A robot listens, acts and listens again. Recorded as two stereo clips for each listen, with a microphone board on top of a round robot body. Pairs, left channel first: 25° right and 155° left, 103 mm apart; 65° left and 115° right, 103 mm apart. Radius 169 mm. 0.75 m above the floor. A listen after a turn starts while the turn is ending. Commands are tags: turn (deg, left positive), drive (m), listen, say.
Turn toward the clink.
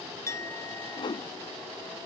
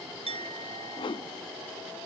<turn deg="-85"/>
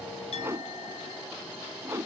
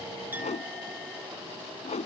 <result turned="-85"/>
<listen/>
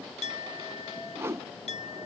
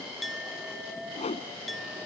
<turn deg="-20"/>
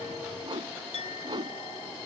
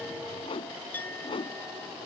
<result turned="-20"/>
<say>Facing the clink.</say>